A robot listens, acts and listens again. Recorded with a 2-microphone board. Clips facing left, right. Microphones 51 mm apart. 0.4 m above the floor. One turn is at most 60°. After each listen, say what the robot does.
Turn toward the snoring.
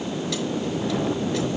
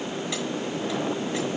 Keep listening.
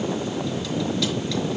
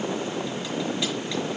Keep listening.
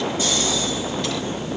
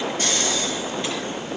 Turn 60° right.
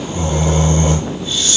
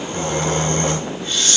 Turn 55° right.
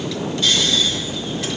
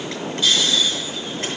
Found it: snoring, straight ahead.